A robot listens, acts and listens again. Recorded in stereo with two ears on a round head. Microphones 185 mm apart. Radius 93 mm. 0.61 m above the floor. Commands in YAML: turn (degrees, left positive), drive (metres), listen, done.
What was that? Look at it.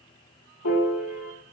turn: 90
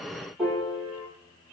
done: "Found it: a piano, straight ahead."